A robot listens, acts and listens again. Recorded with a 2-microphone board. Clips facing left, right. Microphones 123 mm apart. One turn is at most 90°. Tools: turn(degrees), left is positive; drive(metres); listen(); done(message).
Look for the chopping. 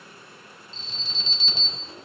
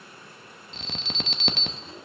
listen()
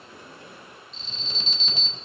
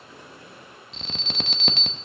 listen()
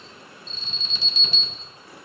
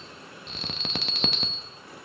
done("I can't make out chopping, only an alarm.")